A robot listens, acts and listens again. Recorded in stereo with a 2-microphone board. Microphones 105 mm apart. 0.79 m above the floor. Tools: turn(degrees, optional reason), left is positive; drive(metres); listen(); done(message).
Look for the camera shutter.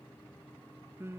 listen()
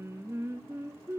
listen()
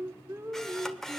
turn(degrees=30)
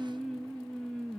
listen()
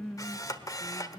turn(degrees=145, reason="So it is at 145° left.")
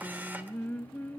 listen()
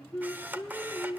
turn(degrees=-15, reason="The camera shutter is now 15° right.")
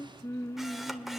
listen()
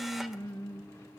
listen()
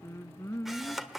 done("Facing the camera shutter, 1 to 2 m away.")